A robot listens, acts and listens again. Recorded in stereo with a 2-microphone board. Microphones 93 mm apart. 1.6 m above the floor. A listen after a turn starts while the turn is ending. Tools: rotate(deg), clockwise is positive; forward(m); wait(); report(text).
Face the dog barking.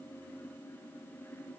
wait()
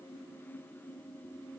wait()
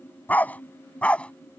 rotate(-30)
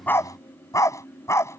rotate(-150)
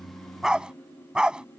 rotate(10)
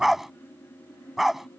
report("Facing the dog barking.")